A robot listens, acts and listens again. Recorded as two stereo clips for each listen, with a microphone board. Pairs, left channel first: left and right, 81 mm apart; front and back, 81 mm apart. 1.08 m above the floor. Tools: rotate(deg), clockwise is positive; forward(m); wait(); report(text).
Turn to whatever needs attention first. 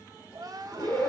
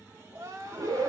rotate(130)
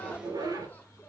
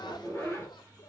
wait()
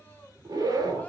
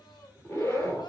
wait()
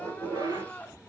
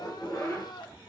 rotate(-20)
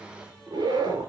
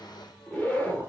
wait()
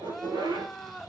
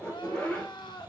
report("Facing the crying, 1 to 2 m away.")